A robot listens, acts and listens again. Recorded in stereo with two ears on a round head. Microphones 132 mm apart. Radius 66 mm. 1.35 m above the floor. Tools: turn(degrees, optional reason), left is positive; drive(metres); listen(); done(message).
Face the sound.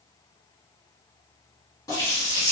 turn(degrees=25, reason="The running tap: about 25° left or 155° left.")
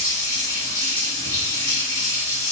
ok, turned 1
turn(degrees=20, reason="The running tap: about 20° left or 160° left.")
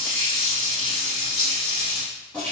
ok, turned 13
turn(degrees=10, reason="So it is at 10° left.")
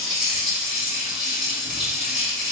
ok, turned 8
done("Found it: a running tap, straight ahead.")